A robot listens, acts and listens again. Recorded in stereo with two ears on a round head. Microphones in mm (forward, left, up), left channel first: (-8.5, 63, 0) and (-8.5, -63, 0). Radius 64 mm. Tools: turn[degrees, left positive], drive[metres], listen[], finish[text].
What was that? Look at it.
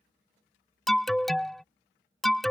Action: turn[30]
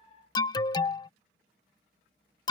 Thought: So it is at 150° left.
Action: turn[150]
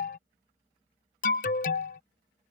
Thought: The alarm is now 60° left.
Action: turn[60]
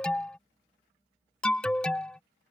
Action: finish[Found it: an alarm, straight ahead.]